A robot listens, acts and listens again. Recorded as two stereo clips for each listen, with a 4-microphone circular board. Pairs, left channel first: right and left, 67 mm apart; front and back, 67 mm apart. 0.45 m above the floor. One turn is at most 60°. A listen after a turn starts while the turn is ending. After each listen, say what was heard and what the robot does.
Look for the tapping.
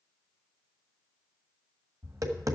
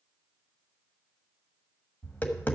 The tapping: 60° left. Turn 60° left.
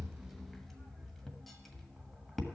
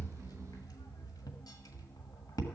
Facing the tapping, 1 to 2 m away.